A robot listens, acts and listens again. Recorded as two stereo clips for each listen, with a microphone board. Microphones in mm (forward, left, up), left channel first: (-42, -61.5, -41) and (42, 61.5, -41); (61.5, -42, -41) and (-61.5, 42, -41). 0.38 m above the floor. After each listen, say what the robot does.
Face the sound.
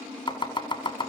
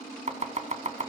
Turn 180° left.
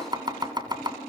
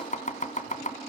Found it: chopping, straight ahead.